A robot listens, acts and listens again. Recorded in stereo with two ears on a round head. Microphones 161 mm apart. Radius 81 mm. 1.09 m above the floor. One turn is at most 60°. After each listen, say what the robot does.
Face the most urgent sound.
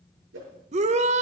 Turn 40° right.
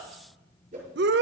Turn 60° right.
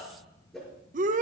Turn 50° right.
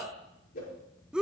Facing the shout.